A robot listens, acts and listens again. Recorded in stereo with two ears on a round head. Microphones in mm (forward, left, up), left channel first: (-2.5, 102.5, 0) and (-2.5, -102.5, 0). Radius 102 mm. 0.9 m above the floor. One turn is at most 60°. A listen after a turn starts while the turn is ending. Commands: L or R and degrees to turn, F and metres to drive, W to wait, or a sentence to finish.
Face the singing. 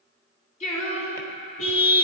L35
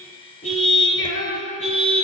L60
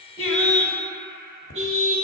L45
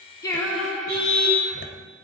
Found it: singing, straight ahead.